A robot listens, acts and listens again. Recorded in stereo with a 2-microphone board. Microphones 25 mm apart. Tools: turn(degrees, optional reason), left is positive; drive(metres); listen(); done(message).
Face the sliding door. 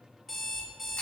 listen()
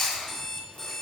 listen()
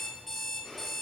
done("I can't make out a sliding door, only an alarm clock and chewing.")